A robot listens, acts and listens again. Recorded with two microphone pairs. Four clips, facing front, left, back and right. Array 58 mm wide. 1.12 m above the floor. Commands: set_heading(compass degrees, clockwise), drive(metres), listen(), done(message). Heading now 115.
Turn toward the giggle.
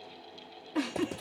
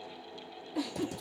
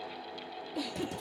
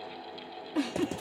set_heading(155)
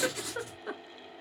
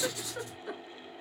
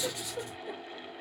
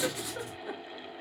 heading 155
done("Facing the giggle.")